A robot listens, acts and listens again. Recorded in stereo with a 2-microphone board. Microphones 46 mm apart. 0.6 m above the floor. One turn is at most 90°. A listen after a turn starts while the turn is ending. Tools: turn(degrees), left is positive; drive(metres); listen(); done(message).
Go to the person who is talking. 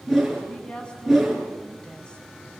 turn(degrees=20)
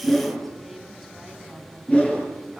listen()
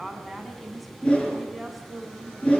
drive(metres=1.0)
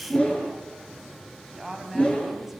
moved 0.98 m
turn(degrees=-10)
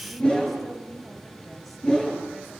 listen()
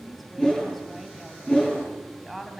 drive(metres=1.0)
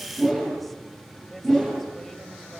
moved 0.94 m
listen()
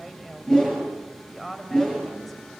drive(metres=1.0)
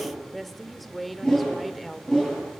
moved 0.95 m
drive(metres=1.0)
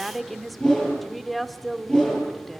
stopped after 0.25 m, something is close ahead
done("Arrived at the woman speaking, straight ahead.")